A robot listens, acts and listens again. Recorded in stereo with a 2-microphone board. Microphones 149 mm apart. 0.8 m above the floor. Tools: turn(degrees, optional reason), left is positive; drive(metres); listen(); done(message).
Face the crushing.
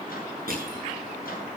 turn(degrees=-75, reason="The crushing: about 75° right or 105° right.")
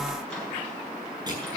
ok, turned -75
turn(degrees=-30, reason="So it is at 30° right.")
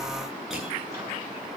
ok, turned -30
done("Found it: crushing, straight ahead, over 4 m away.")